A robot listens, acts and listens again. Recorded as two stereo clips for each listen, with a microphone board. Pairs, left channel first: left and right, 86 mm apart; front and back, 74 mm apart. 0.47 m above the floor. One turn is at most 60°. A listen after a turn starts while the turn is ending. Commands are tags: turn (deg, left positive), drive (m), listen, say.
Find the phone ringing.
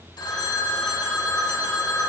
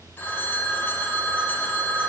<turn deg="60"/>
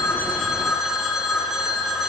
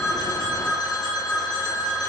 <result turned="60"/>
<say>Found it: a phone ringing, straight ahead.</say>